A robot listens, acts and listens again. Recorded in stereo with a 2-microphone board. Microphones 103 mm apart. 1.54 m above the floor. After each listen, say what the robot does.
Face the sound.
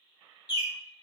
Turn 40° left.
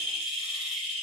Facing the bird, under 1 m away.